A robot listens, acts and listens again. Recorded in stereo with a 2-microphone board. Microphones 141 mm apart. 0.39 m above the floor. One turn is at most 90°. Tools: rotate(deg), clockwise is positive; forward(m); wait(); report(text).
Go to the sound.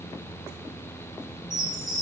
rotate(55)
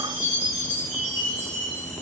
rotate(60)
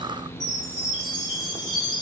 forward(1.0)
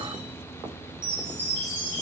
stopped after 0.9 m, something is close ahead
rotate(15)
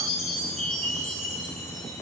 report("I am next to the chime.")